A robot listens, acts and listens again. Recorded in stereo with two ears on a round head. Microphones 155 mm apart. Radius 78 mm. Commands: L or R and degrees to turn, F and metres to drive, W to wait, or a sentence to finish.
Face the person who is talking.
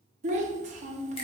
R45
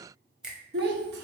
R85
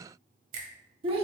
R35
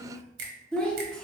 Facing the child speaking.